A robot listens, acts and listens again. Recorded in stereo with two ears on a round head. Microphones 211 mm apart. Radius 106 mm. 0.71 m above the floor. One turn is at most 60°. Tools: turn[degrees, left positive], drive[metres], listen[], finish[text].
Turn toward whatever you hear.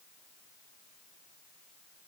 Action: listen[]
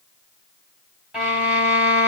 Action: turn[-30]
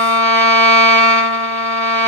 Thought: So it is at 150° right.
Action: turn[-60]
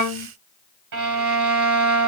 Thought: The violin is now 85° right.
Action: turn[-60]
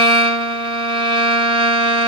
Thought: The violin is now 20° right.
Action: turn[-20]
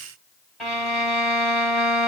Action: finish[Facing the violin, 2 to 4 m away.]